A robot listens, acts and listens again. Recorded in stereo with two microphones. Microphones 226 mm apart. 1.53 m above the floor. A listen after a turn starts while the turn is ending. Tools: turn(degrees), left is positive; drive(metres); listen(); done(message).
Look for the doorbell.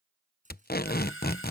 turn(degrees=60)
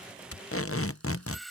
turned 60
done("Found it: a doorbell, straight ahead.")